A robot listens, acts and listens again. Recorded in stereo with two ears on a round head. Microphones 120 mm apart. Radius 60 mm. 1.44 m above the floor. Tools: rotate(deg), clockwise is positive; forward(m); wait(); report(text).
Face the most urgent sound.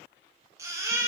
rotate(20)
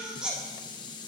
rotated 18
report("Found it: a baby crying, straight ahead.")